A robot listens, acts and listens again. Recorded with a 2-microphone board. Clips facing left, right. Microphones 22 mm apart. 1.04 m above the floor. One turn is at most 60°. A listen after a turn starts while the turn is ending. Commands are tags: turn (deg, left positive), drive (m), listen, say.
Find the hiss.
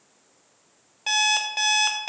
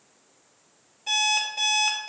<listen/>
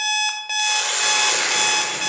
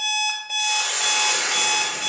<turn deg="35"/>
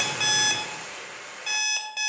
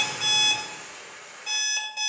<turn deg="60"/>
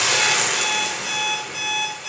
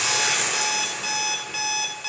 <turn deg="40"/>
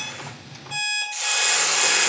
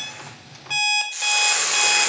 <say>Facing the hiss.</say>